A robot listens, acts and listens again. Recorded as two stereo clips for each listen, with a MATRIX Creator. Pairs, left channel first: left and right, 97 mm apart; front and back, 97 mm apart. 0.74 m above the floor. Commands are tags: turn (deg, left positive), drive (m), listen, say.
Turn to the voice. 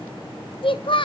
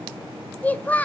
<turn deg="75"/>
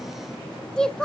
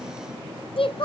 <say>Facing the child speaking.</say>